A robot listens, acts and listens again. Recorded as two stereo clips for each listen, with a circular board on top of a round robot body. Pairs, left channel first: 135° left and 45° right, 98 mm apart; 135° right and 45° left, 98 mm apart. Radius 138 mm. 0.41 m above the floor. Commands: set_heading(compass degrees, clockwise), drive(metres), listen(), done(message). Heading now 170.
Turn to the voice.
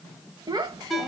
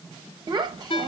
done("Facing the child speaking, 1 to 2 m away.")